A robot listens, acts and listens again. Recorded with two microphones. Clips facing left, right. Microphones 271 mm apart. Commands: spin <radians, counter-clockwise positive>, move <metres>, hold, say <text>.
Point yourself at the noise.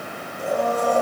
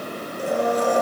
spin -1.57
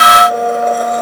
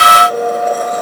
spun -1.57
say Facing the blender, over 4 m away.